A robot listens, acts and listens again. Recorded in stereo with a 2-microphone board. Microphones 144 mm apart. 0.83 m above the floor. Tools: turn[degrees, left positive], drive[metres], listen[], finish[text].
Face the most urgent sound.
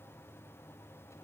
Action: listen[]
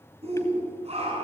Thought: The shout: about 45° right or 135° right.
Action: turn[-45]
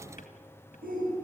Thought: So it is at 90° right.
Action: turn[-90]
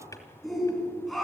Action: finish[Facing the shout.]